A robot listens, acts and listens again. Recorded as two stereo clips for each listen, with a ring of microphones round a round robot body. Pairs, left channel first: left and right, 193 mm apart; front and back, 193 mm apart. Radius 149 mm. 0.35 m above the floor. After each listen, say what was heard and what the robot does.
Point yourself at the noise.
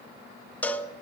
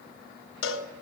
Facing the cowbell, under 1 m away.